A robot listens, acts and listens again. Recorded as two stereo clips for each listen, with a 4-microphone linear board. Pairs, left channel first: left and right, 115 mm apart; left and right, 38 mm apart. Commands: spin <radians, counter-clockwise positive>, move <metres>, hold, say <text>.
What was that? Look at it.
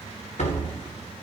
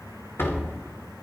spin 1.57
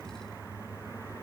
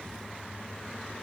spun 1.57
say I heard a door slam from this way, but can't make it out now.